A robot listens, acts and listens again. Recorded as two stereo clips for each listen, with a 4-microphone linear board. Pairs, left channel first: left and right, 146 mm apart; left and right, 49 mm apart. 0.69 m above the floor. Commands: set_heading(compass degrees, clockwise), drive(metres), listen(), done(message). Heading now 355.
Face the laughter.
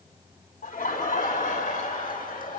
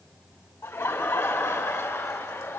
set_heading(265)
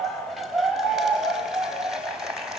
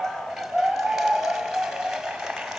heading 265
done("Found it: laughter, straight ahead, over 4 m away.")